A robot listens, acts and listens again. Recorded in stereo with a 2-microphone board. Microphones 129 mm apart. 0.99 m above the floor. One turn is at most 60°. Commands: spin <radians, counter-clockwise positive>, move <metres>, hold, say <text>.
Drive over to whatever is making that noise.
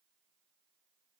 hold
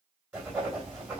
spin -0.52
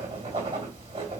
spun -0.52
spin -1.05
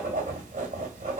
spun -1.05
spin -1.05
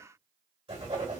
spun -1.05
spin -0.79
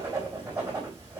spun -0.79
spin -0.26
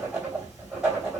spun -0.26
spin -0.17
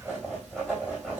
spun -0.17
move 1.0
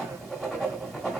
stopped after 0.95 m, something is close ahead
say I am next to the writing.